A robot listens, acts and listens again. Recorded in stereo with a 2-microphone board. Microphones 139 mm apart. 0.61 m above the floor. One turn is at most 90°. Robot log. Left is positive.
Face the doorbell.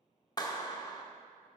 cmd idle
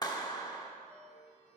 note: The doorbell: about 50° right or 130° right.
cmd yaw -50
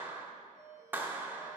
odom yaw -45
note: So it is at 25° right.
cmd yaw -25
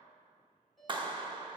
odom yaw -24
end: Found it: a doorbell, straight ahead, 2 to 4 m away.